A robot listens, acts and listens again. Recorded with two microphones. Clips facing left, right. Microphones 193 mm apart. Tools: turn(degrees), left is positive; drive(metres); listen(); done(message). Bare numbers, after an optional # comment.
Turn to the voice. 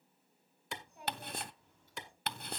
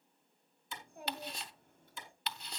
# The child speaking: about 55° right or 125° right.
turn(-55)
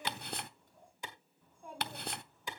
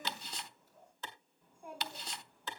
# So it is at 10° right.
turn(-10)
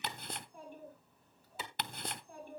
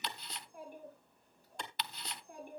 # The child speaking is now 15° right.
turn(-15)
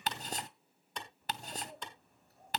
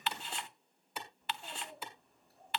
done("Facing the child speaking.")